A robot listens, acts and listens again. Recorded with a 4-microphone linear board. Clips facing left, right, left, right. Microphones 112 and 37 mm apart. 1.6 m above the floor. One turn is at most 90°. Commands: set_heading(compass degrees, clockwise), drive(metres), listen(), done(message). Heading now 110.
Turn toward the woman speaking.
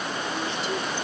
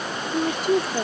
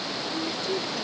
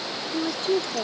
set_heading(160)
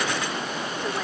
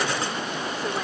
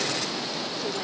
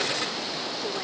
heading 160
listen()
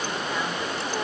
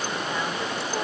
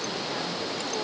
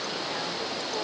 listen()
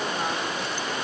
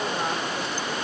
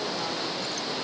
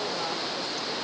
done("I heard a woman speaking, but can't make it out now. It was about straight ahead or 80° right.")